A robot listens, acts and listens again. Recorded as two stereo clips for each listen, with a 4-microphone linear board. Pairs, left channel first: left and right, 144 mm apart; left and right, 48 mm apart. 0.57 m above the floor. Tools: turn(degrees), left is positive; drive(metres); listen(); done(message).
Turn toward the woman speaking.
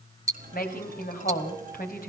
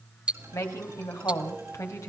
turn(degrees=90)
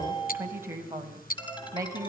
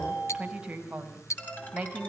turn(degrees=-20)
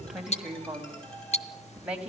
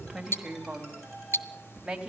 turn(degrees=-10)
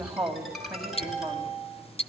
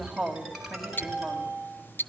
done("Facing the woman speaking, 2 to 4 m away.")